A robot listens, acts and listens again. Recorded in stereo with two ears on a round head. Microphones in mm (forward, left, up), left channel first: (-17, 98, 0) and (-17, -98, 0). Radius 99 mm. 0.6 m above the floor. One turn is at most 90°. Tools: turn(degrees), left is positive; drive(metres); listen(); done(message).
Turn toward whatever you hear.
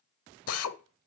turn(degrees=90)
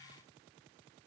listen()
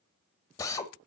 turn(degrees=15)
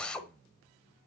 done("Facing the drill.")